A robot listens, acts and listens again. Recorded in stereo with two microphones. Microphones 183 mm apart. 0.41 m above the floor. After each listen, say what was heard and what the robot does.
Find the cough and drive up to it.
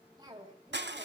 The cough: about 25° right or 155° right. Turn 25° right.
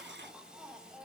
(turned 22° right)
Drive 1.0 m forward.
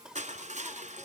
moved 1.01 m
Drive 1.0 m forward.
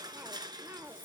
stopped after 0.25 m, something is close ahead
The cough is now 20° right. Turn 20° right.
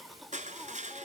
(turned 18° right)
I am next to the cough.